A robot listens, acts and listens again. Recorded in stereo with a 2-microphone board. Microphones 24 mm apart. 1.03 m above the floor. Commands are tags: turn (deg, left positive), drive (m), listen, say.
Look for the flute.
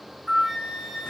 <turn deg="-30"/>
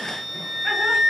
<say>Facing the flute, 2 to 4 m away.</say>